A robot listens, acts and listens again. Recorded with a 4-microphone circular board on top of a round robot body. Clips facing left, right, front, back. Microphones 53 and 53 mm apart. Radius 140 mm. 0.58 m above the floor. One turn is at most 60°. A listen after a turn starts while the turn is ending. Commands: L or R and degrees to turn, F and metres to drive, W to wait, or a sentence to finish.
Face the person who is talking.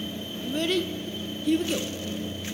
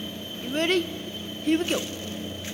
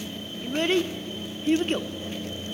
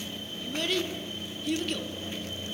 R55
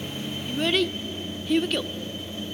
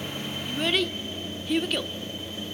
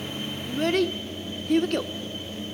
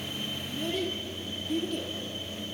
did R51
Found it: a child speaking, straight ahead, 1 to 2 m away.